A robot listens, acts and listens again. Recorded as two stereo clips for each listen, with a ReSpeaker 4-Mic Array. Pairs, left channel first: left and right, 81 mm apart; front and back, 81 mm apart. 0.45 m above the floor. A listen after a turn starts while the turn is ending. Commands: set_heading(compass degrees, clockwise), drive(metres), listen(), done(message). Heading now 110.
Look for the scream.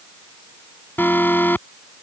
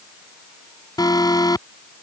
listen()
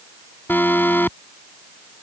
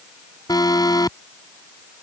listen()
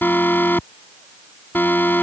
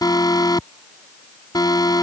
done("I can't make out a scream, only an alarm.")